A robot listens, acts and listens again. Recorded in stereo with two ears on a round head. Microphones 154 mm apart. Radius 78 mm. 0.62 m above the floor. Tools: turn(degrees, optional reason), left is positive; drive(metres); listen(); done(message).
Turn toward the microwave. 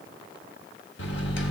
turn(degrees=75, reason="The microwave: about 75° left or 105° left.")
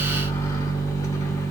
turn(degrees=20, reason="So it is at 20° left.")
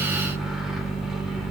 done("Facing the microwave.")